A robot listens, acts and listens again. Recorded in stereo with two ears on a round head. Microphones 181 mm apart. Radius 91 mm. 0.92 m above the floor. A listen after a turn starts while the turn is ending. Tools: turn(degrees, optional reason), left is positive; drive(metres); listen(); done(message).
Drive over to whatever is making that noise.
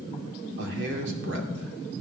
turn(degrees=-65, reason="The man speaking: about 65° right or 115° right.")
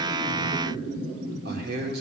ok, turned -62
turn(degrees=-50, reason="So it is at 50° right.")
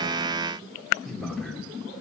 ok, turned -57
drive(metres=1.0)
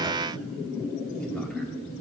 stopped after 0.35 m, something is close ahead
listen()
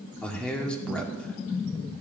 done("Blocked. The man speaking is further on, straight ahead.")